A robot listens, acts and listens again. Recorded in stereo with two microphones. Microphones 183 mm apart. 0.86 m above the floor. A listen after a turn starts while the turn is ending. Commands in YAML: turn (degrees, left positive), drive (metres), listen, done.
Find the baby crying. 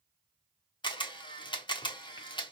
listen: true
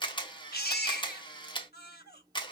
turn: 60
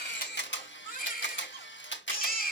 turn: 55
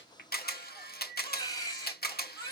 turn: 20
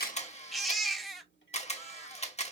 done: "Found it: a baby crying, straight ahead."